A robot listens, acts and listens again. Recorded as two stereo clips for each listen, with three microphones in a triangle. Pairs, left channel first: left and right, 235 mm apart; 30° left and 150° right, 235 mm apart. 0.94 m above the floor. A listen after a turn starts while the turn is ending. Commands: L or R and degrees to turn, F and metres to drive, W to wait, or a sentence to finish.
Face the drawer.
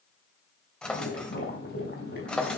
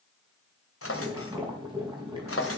Found it: a drawer, straight ahead, 2 to 4 m away.